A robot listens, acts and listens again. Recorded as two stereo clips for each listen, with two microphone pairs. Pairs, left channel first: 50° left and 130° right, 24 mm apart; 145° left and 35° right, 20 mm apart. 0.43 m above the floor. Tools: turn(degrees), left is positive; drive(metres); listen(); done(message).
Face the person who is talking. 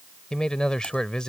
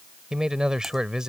turn(degrees=10)
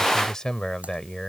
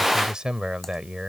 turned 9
done("Facing the man speaking.")